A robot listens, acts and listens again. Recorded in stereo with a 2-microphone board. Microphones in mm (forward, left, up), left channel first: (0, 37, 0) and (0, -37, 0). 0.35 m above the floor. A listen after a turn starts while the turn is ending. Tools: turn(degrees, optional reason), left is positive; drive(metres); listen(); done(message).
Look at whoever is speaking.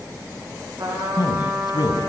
turn(degrees=65, reason="The man speaking: about 65° left or 115° left.")
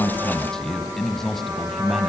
done("Found it: a man speaking, straight ahead, 2 to 4 m away.")